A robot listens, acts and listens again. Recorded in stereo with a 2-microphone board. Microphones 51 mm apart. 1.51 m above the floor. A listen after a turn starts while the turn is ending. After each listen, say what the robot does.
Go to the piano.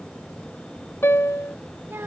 Turn 65° left.
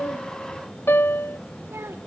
Turn 50° left.
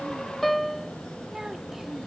Drive 1.0 m forward.
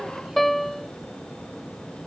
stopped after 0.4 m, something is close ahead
Blocked. The piano is further on, straight ahead.